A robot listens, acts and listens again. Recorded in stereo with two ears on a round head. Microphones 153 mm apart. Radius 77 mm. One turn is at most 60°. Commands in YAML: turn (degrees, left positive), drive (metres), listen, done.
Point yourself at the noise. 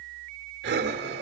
turn: -60
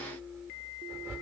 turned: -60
turn: -15
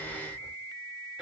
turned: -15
listen: true
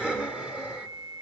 done: "Facing the breathing, 1 to 2 m away."